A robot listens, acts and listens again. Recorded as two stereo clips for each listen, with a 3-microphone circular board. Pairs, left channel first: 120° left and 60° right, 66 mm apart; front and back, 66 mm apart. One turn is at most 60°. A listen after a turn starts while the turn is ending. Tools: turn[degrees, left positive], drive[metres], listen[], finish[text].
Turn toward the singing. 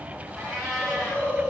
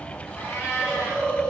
Action: listen[]
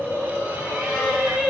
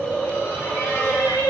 Thought: The singing: 15° left.
Action: turn[15]
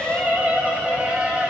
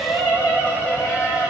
Thought: The singing is now 25° left.
Action: turn[25]
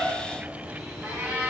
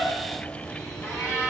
Action: listen[]
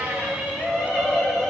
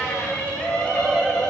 Thought: The singing is now 30° left.
Action: turn[30]
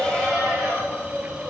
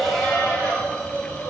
Action: listen[]
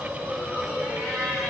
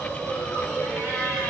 Action: listen[]
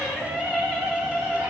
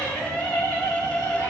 Thought: The singing is now 20° left.
Action: turn[20]
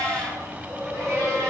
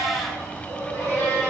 Action: listen[]
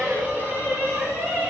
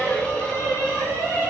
Action: finish[Facing the singing.]